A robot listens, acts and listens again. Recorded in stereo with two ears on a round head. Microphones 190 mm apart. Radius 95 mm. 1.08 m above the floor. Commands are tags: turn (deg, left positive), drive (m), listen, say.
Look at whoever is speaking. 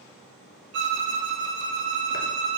<listen/>
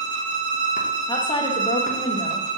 <turn deg="20"/>
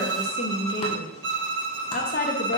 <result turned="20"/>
<turn deg="140"/>
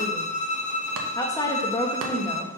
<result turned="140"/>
<turn deg="15"/>
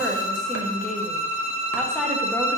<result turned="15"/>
<say>Found it: a woman speaking, straight ahead, 1 to 2 m away.</say>